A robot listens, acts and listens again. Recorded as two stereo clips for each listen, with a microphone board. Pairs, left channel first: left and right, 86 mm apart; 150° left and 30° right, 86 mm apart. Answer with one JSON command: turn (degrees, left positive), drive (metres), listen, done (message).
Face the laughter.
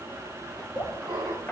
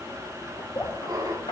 {"turn": -70}
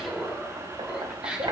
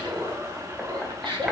{"turn": -15}
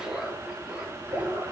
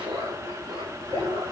{"turn": -25}
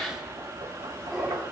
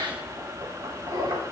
{"done": "Facing the laughter."}